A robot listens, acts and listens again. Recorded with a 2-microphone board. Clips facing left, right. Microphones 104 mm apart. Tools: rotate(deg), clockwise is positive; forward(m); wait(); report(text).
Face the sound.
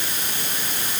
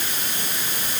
wait()
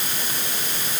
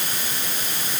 wait()
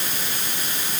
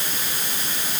report("I can't make out anything.")